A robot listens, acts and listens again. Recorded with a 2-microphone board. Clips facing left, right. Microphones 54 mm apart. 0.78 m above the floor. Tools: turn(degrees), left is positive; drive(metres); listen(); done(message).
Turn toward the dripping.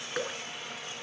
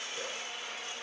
turn(degrees=90)
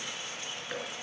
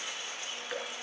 done("Found it: dripping, straight ahead.")